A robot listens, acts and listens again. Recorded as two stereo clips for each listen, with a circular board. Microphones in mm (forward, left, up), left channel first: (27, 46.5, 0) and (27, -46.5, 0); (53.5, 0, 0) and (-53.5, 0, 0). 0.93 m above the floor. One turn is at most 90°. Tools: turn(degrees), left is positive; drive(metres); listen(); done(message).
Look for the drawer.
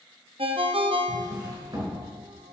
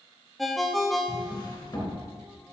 turn(degrees=-50)
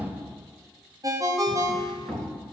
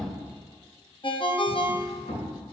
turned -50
done("Facing the drawer.")